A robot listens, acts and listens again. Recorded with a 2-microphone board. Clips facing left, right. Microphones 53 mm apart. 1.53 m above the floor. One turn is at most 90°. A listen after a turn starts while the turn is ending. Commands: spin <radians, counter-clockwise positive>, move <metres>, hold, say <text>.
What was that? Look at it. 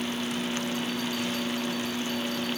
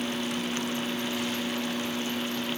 hold
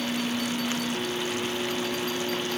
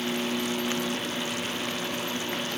hold
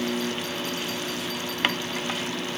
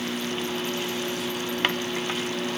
say I can't make out anything.